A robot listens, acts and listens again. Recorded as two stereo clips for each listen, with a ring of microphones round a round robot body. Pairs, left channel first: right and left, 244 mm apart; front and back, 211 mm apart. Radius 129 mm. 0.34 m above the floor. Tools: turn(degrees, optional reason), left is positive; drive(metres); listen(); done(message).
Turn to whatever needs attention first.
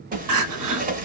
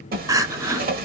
turn(degrees=105, reason="The crying: 105° left.")
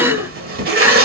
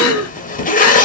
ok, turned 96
turn(degrees=10, reason="The crying is now 10° left.")
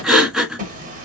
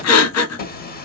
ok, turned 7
done("Facing the crying.")